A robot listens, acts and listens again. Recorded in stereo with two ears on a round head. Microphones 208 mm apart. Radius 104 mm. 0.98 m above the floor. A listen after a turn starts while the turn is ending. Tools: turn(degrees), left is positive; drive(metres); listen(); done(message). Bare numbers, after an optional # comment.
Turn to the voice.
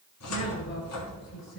# The woman speaking: about 55° left or 125° left.
turn(55)
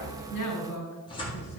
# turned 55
# So it is at 70° left.
turn(70)
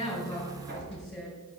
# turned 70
done("Facing the woman speaking.")